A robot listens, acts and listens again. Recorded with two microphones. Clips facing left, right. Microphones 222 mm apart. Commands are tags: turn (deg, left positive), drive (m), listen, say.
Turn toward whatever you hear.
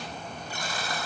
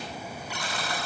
<turn deg="-90"/>
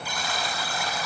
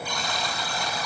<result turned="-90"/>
<say>Facing the buzzer, over 4 m away.</say>